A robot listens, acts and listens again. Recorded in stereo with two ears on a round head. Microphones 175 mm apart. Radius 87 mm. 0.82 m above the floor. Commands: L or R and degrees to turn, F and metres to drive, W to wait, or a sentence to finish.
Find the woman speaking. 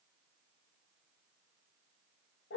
W
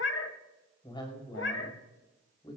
L25
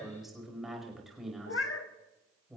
Facing the woman speaking.